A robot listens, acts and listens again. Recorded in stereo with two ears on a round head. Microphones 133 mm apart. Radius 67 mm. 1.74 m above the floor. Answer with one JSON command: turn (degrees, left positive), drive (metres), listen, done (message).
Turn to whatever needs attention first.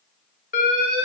{"turn": 55}
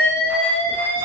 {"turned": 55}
{"turn": 15}
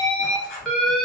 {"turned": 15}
{"done": "Found it: an alarm, straight ahead, under 1 m away."}